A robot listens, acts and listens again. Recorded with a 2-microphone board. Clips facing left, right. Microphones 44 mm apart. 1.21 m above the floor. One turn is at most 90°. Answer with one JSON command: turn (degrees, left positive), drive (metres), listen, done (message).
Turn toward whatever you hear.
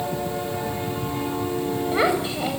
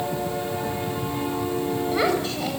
{"turn": 30}
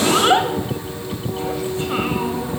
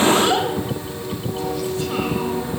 {"turn": 90}
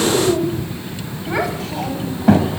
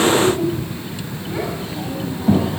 {"turn": 85}
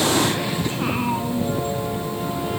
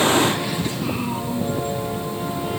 {"turn": 35}
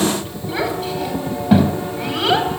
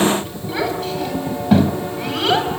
{"done": "Found it: a child speaking, straight ahead, over 4 m away."}